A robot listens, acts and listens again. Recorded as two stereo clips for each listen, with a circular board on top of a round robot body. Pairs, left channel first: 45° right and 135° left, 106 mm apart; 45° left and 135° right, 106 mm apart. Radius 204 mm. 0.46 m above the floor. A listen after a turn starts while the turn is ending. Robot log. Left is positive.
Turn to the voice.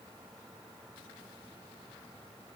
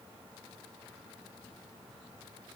cmd idle
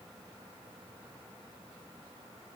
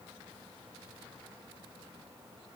cmd idle
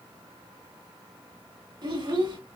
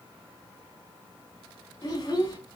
note: The child speaking: 95° left.
cmd yaw +95
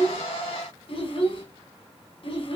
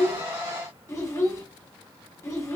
note: The child speaking is now 15° right.
cmd yaw -15
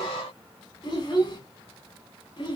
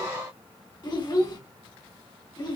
end: Facing the child speaking.